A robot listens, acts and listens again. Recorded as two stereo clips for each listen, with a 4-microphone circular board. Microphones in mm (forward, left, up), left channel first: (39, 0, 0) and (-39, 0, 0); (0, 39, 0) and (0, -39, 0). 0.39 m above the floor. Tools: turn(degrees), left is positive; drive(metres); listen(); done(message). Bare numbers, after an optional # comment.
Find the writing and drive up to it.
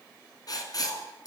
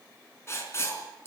# The writing: 35° left.
turn(35)
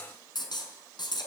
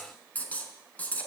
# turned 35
# The writing is now 20° left.
turn(20)
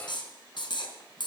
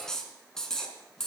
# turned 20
drive(1.0)
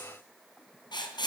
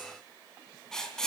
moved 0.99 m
# The writing is now 10° left.
turn(10)
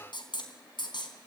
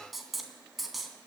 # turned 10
drive(1.0)
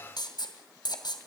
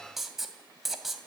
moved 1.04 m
drive(1.0)
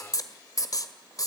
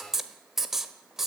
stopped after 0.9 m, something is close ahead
done("Arrived at the writing, straight ahead.")